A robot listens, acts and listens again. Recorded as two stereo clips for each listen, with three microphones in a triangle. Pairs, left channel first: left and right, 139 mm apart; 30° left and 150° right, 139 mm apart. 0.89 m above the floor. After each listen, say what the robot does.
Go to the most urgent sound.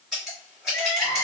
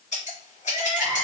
Turn 50° right.
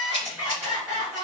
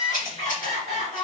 Turn 10° right.
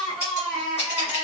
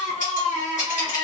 Drive 1.0 m forward.
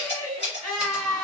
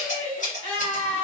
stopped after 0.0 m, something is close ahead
Blocked. The crying is further on, straight ahead.